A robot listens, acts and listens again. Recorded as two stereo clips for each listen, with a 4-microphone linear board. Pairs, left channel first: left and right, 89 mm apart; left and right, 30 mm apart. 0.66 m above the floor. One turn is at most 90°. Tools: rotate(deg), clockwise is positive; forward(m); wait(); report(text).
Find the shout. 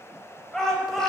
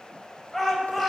rotate(-30)
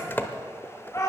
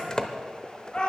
rotate(-90)
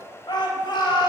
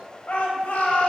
rotate(-60)
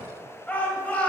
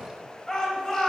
rotate(-20)
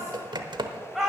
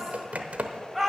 report("Found it: a shout, straight ahead.")